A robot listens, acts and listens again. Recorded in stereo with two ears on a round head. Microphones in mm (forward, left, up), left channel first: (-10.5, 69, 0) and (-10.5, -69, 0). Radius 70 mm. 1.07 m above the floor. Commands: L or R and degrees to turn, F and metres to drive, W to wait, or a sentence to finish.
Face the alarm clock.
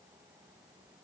W
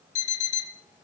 L45
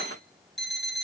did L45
Found it: an alarm clock, straight ahead.